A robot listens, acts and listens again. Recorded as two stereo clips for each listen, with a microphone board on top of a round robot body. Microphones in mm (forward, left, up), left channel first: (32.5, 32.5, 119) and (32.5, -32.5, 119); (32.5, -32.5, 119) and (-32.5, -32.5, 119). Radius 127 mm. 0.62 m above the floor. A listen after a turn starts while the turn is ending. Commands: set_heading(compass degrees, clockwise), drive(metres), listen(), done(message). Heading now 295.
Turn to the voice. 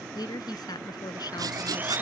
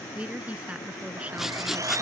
set_heading(190)
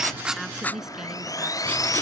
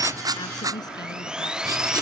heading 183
listen()
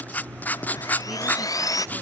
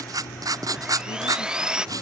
listen()
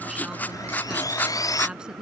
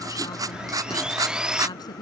set_heading(193)
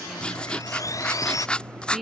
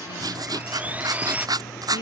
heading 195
done("Found it: a woman speaking, straight ahead.")